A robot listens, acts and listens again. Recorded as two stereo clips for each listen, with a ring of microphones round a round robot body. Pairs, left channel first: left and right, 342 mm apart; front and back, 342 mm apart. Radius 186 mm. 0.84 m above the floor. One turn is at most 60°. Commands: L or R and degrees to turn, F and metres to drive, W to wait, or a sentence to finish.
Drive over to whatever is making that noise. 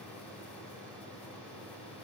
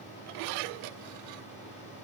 W
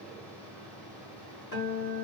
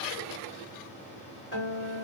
L60
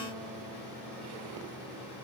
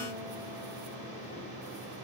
W
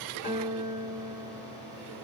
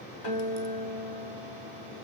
L25
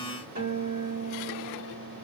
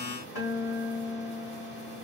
R25
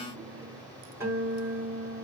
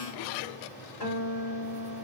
F1.0
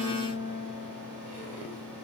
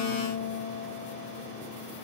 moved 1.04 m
R15
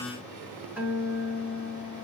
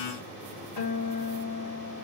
F1.0
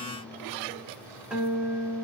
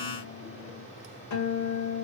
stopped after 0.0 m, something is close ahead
Arrived at the guitar, straight ahead.